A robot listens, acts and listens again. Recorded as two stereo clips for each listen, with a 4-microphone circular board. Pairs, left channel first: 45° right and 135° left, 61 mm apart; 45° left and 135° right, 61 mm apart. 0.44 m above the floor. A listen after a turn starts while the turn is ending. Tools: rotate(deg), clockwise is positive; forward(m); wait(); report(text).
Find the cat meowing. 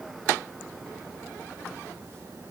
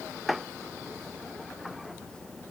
wait()
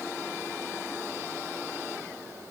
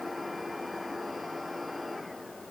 wait()
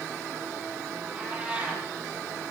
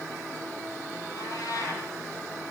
rotate(-65)
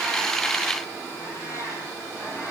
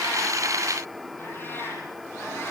rotate(10)
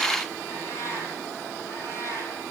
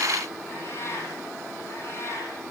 report("Found it: a cat meowing, straight ahead.")